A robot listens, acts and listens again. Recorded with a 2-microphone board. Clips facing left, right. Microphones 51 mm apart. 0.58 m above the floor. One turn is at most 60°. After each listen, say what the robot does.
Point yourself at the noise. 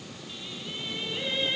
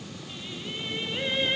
Turn 30° right.
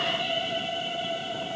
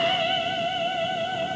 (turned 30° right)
Turn 60° right.
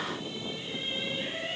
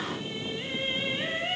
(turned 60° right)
Turn 50° right.
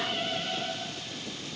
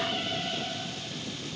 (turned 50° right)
Turn 20° left.
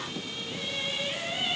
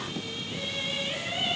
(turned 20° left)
Found it: singing, straight ahead, over 4 m away.